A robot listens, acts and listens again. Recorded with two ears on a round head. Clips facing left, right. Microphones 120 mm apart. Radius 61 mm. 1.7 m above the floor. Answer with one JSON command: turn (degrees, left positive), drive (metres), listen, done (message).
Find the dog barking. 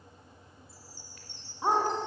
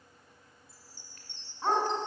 {"turn": 30}
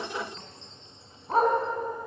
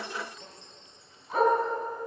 {"turn": 150}
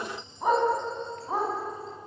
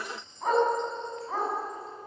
{"turn": 15}
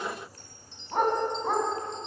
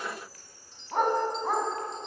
{"done": "Found it: a dog barking, straight ahead, over 4 m away."}